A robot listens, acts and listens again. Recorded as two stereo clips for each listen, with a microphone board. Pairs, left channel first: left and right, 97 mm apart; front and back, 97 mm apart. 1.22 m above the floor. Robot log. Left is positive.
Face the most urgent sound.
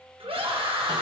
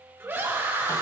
note: The scream: 110° right.
cmd yaw -110
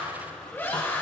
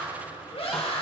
note: The scream is now 20° left.
cmd yaw +20
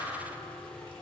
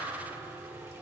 cmd idle
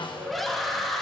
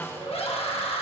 end: Found it: a scream, straight ahead.